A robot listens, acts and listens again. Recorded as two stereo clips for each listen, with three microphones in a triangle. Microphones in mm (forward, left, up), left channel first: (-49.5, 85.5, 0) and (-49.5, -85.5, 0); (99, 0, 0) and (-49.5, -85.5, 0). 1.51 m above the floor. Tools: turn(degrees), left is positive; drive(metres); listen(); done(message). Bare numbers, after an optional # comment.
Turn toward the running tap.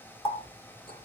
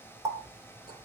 # The running tap: 145° left.
turn(145)
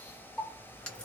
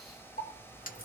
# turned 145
done("Found it: a running tap, straight ahead, 1 to 2 m away.")